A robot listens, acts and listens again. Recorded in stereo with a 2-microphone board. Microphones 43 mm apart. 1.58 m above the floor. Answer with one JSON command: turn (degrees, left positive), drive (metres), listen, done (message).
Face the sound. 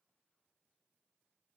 {"listen": true}
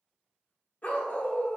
{"turn": 35}
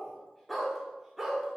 {"turn": -10}
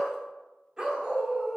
{"turn": -25}
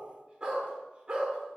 {"turn": -25}
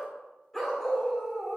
{"turn": 10}
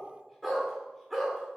{"done": "Facing the dog barking."}